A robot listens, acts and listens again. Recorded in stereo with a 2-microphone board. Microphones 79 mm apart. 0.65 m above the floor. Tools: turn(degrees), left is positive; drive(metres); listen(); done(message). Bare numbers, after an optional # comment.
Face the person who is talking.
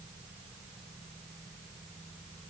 listen()
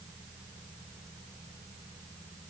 listen()
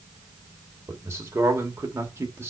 # The man speaking: about 35° right or 145° right.
turn(-35)
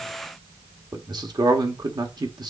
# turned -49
# So it is at 115° right.
turn(-115)
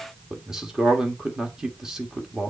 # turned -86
done("Facing the man speaking.")